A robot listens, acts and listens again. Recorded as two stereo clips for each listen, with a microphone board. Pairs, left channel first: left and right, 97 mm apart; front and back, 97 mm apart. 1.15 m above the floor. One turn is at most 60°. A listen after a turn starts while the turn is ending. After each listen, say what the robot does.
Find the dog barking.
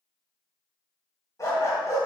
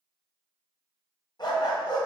Turn 35° left.
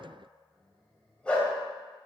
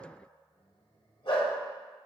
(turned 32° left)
Turn 15° left.
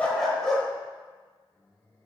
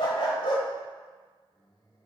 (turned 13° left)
Found it: a dog barking, straight ahead.